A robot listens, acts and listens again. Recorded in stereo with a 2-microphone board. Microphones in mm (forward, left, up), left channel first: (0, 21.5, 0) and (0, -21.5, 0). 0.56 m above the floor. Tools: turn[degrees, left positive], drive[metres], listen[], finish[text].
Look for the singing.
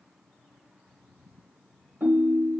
Action: listen[]
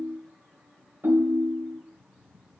Action: listen[]
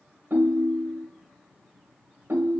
Action: finish[I can't make out singing, only a ringtone.]